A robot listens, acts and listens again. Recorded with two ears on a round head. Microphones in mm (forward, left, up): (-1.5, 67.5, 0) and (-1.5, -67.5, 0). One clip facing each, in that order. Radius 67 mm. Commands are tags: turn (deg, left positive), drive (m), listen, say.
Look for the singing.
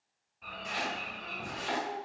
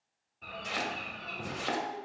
<turn deg="70"/>
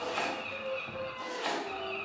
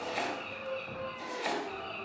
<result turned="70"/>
<turn deg="45"/>
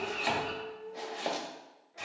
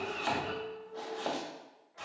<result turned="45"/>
<turn deg="40"/>
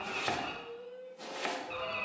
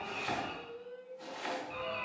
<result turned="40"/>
<say>Facing the singing, 2 to 4 m away.</say>